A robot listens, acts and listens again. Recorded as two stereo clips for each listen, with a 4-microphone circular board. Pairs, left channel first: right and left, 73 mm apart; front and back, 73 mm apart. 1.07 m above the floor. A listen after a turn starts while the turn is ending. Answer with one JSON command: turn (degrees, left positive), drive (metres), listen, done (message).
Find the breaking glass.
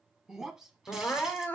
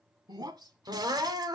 {"turn": 170}
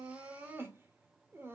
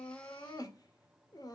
{"done": "Facing where the breaking glass came from. I can't hear it now."}